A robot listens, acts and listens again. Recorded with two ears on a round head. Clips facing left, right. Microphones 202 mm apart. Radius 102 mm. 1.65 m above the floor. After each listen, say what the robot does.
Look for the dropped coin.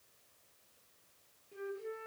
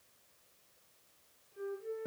Keep listening.
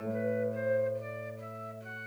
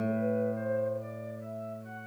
Keep listening.
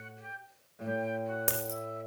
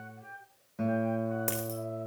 Turn 30° left.
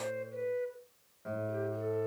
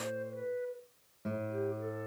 Keep listening.
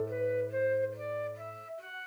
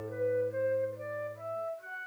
I heard a dropped coin, but can't make it out now. It was about 20° right or 140° left.